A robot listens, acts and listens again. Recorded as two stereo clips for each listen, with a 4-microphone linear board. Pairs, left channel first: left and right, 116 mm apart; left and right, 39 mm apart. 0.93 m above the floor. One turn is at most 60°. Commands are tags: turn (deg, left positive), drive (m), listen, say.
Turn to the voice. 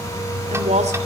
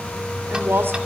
<turn deg="-60"/>
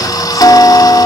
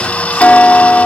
<turn deg="-30"/>
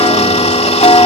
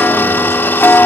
<listen/>
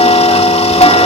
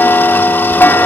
<say>Facing where the woman speaking came from. I can't hear it now.</say>